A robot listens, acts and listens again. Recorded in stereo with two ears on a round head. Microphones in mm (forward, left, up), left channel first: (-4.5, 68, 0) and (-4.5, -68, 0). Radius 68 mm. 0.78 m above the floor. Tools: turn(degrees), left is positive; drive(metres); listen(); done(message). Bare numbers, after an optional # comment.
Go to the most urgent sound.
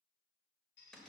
listen()
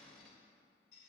listen()
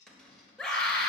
turn(30)
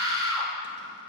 # So it is at 20° right.
turn(-20)
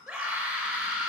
drive(1.0)
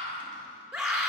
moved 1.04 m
drive(1.0)
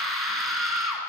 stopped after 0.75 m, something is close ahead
done("I am next to the scream.")